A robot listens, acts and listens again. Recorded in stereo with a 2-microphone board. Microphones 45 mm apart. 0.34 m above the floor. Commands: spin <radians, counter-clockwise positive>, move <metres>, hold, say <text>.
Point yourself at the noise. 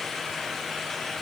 hold
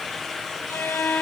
spin 1.13
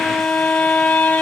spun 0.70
spin 0.87
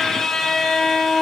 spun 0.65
spin 0.17
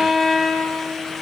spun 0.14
say Found it: a violin, straight ahead.